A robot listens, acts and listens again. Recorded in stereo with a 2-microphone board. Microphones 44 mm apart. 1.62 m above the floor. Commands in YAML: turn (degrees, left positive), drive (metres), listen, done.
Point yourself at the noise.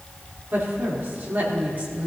turn: -45
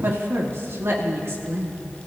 turn: -120
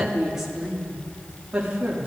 turn: -25
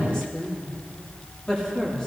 turn: 15
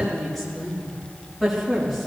done: "Facing the woman speaking, 2 to 4 m away."